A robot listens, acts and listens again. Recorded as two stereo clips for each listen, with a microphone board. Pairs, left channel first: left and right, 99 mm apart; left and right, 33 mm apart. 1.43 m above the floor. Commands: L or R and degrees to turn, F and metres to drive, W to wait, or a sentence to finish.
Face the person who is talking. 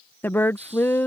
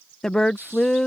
L20
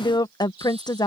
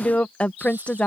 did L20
L140
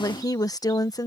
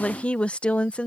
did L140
L35
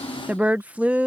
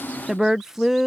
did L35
R15
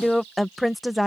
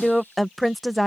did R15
Found it: a woman speaking, straight ahead.